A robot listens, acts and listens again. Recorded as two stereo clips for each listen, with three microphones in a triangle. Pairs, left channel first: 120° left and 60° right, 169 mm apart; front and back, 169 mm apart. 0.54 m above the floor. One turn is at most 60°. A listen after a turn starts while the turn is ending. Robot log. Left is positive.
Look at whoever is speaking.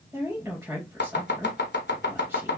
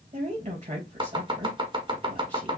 note: The woman speaking: 135° right.
cmd yaw -60
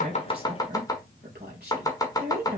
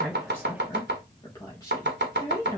note: The woman speaking is now 70° right.
cmd yaw -60
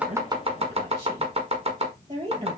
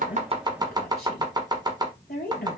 note: The woman speaking is now 10° right.
cmd yaw -10
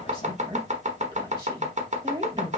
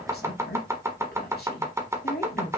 end: Facing the woman speaking, 2 to 4 m away.